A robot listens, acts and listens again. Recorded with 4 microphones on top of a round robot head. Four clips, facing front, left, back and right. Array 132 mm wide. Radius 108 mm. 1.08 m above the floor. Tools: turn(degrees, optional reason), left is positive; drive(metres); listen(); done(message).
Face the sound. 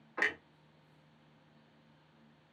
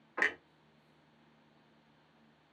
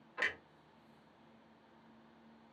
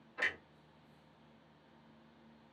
turn(degrees=55, reason="The clunk: 55° left.")
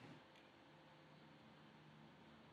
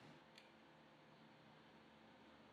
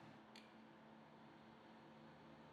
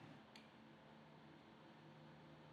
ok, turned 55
done("Facing where the clunk came from. I can't hear it now.")